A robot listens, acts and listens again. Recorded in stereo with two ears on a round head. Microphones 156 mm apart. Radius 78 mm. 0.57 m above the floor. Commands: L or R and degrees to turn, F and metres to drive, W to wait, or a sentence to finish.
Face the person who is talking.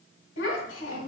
L75
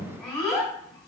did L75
Facing the child speaking, 1 to 2 m away.